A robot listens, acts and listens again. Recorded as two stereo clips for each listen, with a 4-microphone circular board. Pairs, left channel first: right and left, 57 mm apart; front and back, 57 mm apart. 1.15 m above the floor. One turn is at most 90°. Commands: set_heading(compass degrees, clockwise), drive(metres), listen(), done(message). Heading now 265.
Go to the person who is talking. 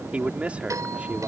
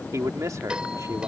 set_heading(175)
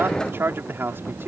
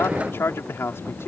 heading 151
set_heading(106)
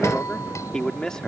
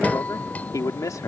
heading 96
set_heading(106)
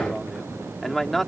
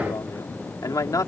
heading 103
drive(1.0)
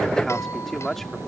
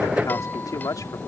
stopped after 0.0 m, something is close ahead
done("Blocked. The man speaking is further on, straight ahead.")